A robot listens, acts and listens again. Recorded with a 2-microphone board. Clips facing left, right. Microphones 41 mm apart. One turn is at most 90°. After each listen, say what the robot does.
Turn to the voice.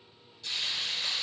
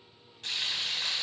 Keep listening.
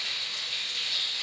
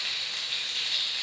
Keep listening.
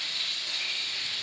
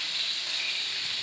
I can't make out anyone speaking, only frying.